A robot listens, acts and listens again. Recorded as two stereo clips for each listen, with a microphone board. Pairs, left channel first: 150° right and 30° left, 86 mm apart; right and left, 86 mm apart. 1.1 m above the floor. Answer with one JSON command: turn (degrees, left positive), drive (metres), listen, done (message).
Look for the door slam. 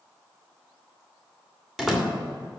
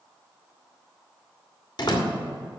{"turn": -55}
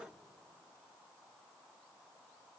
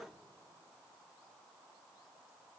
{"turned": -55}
{"done": "I heard a door slam from this way, but can't make it out now."}